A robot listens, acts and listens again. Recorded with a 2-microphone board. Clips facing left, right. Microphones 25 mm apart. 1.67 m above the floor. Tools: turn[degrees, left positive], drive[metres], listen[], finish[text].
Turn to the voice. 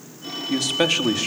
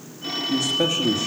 Thought: The man speaking: about 75° left or 105° left.
Action: turn[75]
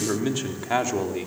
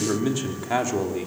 Thought: So it is at 10° left.
Action: turn[10]
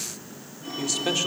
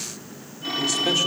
Action: listen[]
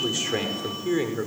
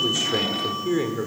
Thought: The man speaking is now 10° left.
Action: turn[10]
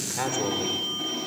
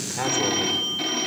Action: finish[Facing the man speaking.]